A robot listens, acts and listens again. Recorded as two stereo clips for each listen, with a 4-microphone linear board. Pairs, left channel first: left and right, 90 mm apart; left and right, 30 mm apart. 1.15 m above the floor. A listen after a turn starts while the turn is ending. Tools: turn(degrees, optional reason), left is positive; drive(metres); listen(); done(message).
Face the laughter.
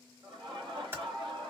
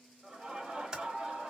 turn(degrees=-50, reason="The laughter: about 50° right or 130° right.")
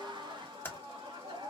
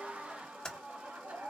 turn(degrees=-80, reason="So it is at 80° right.")
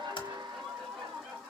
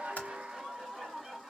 done("Facing the laughter.")